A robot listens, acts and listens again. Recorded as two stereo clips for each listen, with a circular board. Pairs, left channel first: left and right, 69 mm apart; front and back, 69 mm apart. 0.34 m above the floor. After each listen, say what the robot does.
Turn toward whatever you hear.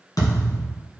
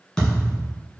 Turn 75° left.
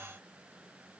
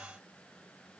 I heard a thud from this way, but can't make it out now.